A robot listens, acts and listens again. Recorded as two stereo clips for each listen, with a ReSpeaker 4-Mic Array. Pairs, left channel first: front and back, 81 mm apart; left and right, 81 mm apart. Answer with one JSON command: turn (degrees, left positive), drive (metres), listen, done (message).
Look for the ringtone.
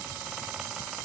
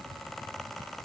{"listen": true}
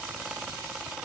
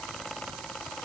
{"listen": true}
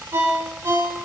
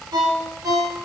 {"turn": -130}
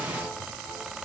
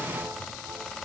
{"listen": true}
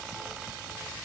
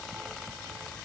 {"listen": true}
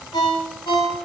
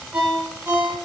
{"turn": -20}
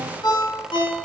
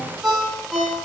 {"done": "Facing the ringtone."}